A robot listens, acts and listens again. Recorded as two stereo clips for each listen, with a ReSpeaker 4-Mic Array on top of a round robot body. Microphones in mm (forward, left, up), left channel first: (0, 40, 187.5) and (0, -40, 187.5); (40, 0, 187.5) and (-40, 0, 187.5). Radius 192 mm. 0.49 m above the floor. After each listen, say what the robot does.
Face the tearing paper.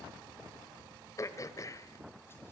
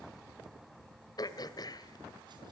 Keep listening.
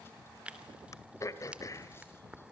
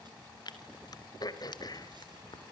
Turn 15° right.
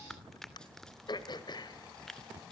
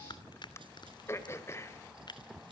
Facing the tearing paper, 2 to 4 m away.